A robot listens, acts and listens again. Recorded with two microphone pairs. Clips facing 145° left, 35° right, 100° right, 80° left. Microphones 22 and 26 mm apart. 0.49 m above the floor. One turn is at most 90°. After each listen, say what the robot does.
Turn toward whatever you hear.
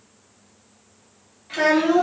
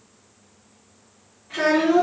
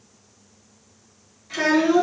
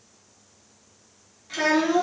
Turn 90° left.
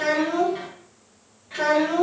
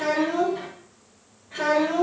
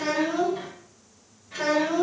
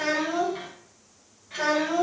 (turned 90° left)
Turn 90° left.
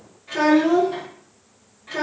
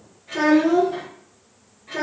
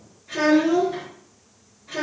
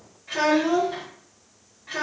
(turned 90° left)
Turn 85° left.
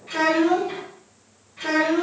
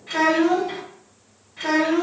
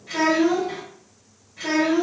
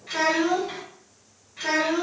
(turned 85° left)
Found it: a child speaking, straight ahead, 1 to 2 m away.